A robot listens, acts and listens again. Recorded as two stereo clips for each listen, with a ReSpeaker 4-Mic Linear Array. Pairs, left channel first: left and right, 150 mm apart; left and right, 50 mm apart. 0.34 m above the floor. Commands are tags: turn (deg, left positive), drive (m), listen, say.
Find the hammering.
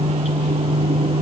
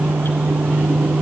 <listen/>
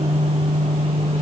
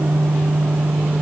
<listen/>
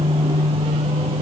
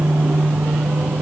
<say>I can't make out hammering to turn to.</say>